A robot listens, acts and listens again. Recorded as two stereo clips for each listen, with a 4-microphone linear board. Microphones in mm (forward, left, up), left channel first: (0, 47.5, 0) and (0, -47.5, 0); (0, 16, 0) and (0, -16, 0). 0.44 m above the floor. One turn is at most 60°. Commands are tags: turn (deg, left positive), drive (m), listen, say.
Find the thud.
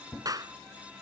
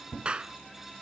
<turn deg="30"/>
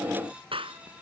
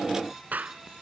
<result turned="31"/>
<listen/>
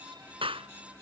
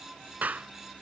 <say>I heard a thud, but can't make it out now. It was about 25° right or 140° left.</say>